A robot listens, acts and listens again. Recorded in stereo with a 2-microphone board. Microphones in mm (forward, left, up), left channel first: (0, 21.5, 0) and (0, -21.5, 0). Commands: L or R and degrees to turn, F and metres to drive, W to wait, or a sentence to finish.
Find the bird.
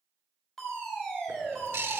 R70
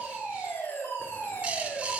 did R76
R30
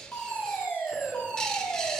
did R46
L15
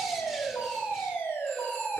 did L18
W
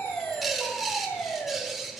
Facing the bird, under 1 m away.